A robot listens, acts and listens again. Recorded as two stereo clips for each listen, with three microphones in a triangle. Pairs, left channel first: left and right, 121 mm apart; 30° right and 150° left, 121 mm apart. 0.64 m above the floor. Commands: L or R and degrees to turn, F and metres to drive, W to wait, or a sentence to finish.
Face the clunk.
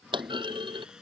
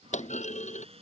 R40
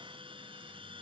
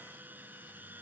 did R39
I heard a clunk from this way, but can't make it out now.